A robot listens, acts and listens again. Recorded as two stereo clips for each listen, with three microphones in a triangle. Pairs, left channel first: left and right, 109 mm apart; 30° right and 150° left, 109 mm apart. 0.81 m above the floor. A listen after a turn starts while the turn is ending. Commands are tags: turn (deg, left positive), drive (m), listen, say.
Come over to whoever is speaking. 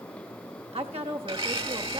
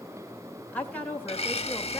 <turn deg="-105"/>
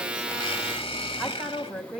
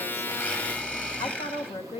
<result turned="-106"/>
<drive m="1.0"/>
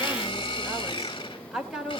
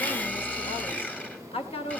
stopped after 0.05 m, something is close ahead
<say>Something is in my way. I am facing the woman speaking but have not reached it.</say>